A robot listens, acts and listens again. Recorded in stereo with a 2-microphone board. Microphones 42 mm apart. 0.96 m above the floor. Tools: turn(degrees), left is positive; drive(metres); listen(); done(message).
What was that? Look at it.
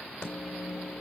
turn(degrees=30)
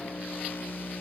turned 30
turn(degrees=120)
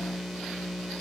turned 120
turn(degrees=-10)
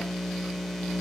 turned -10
done("Facing the microwave.")